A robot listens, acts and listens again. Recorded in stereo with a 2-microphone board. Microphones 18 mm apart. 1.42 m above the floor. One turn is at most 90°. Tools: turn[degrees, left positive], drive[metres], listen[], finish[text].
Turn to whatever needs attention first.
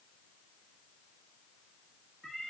Action: listen[]
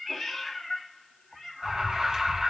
Thought: The alarm: about 35° right or 145° right.
Action: turn[-35]
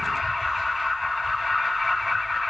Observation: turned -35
Action: finish[Found it: an alarm, straight ahead, 2 to 4 m away.]